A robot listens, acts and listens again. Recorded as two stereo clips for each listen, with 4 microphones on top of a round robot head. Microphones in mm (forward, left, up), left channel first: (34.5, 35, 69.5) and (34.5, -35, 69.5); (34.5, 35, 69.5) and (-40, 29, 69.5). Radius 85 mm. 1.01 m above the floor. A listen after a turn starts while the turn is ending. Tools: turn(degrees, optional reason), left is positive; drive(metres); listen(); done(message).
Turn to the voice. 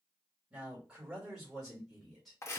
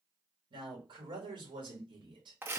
turn(degrees=180, reason="The man speaking: straight behind.")
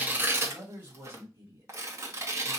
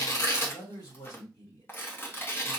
turn(degrees=-40, reason="The man speaking is now 40° right.")
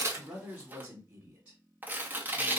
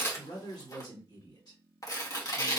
turn(degrees=-25, reason="The man speaking is now 25° right.")
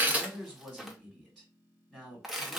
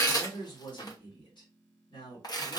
done("Found it: a man speaking, straight ahead.")